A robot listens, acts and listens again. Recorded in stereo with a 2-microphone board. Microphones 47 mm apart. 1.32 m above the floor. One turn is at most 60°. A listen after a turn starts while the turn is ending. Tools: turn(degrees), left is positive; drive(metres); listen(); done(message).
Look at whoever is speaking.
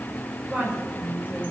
turn(degrees=-25)
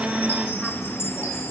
listen()
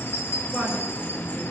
done("Found it: a woman speaking, straight ahead.")